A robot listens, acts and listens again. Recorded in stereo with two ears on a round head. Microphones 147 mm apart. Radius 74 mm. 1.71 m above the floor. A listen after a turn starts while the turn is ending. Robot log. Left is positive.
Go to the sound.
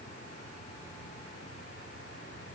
cmd idle
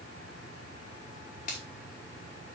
note: The finger snap: about 45° left or 135° left.
cmd yaw +45
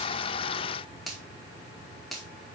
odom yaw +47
cmd fwd 1.0
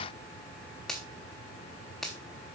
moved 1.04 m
cmd fwd 1.0
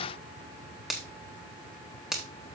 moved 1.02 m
cmd fwd 1.0
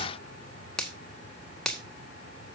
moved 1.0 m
cmd fwd 1.0
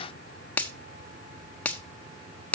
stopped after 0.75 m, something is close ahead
note: The finger snap is now 10° left.
cmd yaw +10
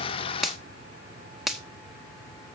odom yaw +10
end: Arrived at the finger snap, straight ahead.